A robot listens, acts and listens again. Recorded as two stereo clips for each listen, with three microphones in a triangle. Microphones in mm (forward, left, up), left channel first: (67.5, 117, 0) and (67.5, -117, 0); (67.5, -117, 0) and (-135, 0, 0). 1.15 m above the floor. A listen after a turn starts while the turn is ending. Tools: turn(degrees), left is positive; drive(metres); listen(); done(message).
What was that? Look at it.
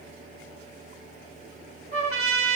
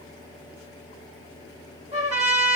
turn(degrees=-150)
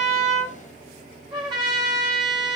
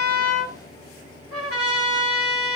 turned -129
turn(degrees=-20)
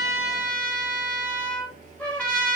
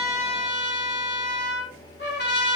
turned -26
done("Facing the trumpet.")